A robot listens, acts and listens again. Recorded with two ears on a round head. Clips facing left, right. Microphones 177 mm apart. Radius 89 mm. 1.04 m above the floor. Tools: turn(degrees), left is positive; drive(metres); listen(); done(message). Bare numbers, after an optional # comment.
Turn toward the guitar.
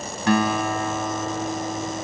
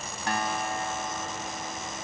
# The guitar: about 60° left or 120° left.
turn(60)
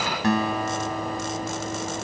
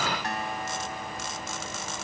# So it is at 60° left.
turn(60)
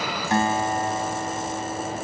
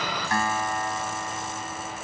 # The guitar is now 20° left.
turn(20)
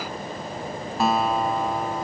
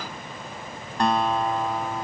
done("Found it: a guitar, straight ahead.")